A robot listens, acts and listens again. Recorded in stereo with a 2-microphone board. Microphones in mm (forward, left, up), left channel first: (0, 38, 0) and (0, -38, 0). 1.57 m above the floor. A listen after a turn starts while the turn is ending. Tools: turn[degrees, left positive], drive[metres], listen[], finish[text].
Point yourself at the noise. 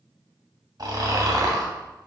Thought: The snoring: about 65° right or 115° right.
Action: turn[-65]
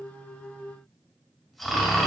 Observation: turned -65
Action: finish[Found it: snoring, straight ahead.]